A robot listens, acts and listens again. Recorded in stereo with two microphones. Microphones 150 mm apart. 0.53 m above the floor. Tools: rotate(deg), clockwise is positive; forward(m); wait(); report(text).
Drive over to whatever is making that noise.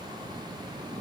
wait()
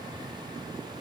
wait()
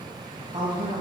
rotate(35)
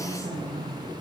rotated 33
rotate(105)
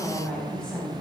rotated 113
forward(1.0)
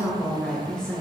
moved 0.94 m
forward(1.0)
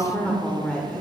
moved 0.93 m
rotate(-10)
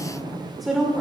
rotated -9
forward(1.0)
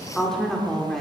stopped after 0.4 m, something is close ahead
report("Arrived at the woman speaking, straight ahead.")